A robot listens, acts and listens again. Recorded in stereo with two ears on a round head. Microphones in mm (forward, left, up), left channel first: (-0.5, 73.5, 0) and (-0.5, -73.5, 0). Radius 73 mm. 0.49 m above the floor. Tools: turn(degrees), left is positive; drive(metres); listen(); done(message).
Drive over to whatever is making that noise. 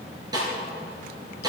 turn(degrees=-25)
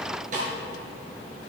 turn(degrees=-130)
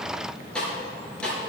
drive(metres=1.0)
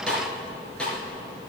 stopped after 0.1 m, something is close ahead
done("Something is in my way. I am facing the snare drum but have not reached it.")